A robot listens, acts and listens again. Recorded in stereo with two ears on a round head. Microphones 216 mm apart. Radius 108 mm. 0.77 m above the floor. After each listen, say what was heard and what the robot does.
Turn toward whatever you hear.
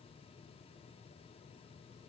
Keep listening.
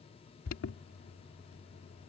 The alarm: about 65° left or 115° left. Turn 65° left.
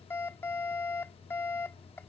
So it is at 10° left. Turn 10° left.
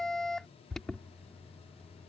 Facing the alarm.